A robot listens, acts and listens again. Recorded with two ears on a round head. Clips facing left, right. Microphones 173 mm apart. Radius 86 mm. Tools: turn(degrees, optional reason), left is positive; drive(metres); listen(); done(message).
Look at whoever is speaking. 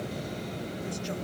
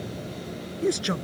turn(degrees=-90)
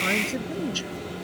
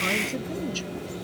done("Facing the man speaking.")